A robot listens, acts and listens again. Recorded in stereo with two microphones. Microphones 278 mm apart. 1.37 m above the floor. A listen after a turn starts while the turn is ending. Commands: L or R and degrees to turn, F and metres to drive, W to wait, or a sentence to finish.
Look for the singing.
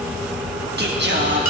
R45
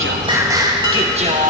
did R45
R30
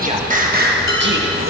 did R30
R45
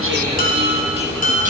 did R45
W
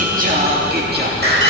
R35
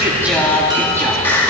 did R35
Found it: singing, straight ahead, 2 to 4 m away.